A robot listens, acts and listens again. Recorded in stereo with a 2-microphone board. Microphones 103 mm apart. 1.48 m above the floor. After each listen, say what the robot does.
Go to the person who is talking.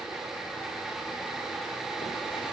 Keep listening.
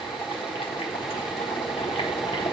Keep listening.
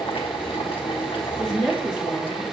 Turn 30° left.
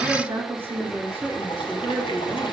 Turn 20° right.
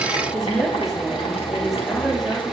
Drive 1.0 m forward.
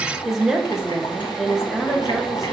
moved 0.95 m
Drive 1.0 m forward.
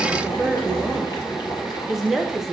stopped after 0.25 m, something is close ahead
Arrived at the woman speaking, straight ahead.